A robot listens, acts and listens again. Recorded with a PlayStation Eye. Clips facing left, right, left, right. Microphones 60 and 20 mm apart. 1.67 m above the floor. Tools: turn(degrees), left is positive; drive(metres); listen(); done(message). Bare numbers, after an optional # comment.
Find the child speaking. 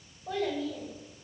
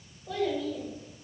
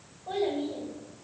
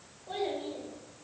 # The child speaking: about 40° left or 140° left.
turn(40)
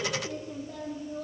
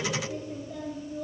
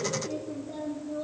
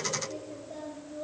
# So it is at 110° left.
turn(110)
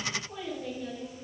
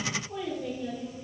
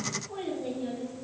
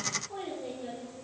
done("Facing the child speaking.")